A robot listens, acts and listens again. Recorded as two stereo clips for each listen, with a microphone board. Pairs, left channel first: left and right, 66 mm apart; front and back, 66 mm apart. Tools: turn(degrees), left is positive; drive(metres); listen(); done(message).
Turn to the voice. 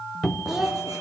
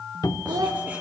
turn(degrees=-175)
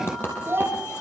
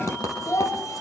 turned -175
turn(degrees=-35)
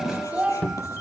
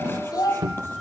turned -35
turn(degrees=-20)
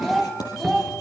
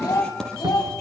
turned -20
done("Found it: a child speaking, straight ahead.")